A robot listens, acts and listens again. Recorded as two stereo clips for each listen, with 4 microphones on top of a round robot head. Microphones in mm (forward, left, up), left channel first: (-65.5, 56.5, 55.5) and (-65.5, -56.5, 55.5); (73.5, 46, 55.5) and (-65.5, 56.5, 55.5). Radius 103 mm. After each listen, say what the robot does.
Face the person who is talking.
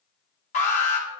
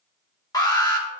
Keep listening.
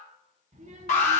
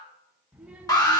Turn 100° right.
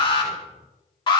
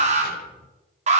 Turn 25° right.
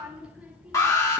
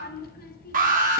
Found it: a child speaking, straight ahead.